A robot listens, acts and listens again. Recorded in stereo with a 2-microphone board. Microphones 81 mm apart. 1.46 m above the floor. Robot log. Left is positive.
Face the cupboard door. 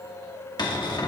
note: The cupboard door: about 60° left or 120° left.
cmd yaw +60
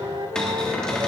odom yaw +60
note: So it is at 10° left.
cmd yaw +10
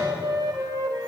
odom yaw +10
cmd idle
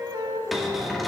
end: Found it: a cupboard door, straight ahead.